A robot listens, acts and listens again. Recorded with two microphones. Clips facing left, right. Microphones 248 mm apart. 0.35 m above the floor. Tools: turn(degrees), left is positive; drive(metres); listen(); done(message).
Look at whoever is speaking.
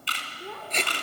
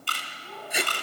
turn(degrees=75)
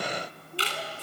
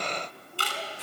listen()
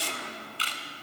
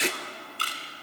listen()
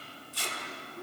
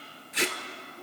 done("I heard a child speaking, but can't make it out now. It was about straight ahead or 30° left.")